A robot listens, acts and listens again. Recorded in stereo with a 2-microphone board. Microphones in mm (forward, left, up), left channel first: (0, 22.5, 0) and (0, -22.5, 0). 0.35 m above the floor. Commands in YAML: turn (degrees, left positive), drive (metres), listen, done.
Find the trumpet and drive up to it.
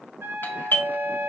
turn: -70
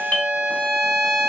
drive: 1.0
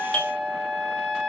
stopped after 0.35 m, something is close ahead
done: "Something is in my way. I am facing the trumpet but have not reached it."